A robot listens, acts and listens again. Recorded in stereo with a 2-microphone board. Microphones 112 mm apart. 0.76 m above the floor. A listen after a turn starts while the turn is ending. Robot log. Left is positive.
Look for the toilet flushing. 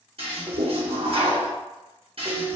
note: The toilet flushing: about 60° right or 120° right.
cmd yaw -60
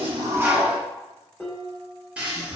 note: So it is at 10° right.
cmd yaw -10
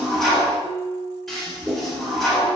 end: Facing the toilet flushing, under 1 m away.